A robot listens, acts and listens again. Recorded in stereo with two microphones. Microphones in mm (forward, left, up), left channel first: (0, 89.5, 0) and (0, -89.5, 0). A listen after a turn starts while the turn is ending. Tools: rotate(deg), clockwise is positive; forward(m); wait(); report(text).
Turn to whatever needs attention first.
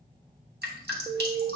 rotate(20)
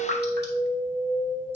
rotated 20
rotate(135)
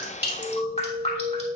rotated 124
rotate(10)
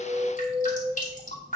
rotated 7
report("Found it: an alarm, straight ahead, 1 to 2 m away.")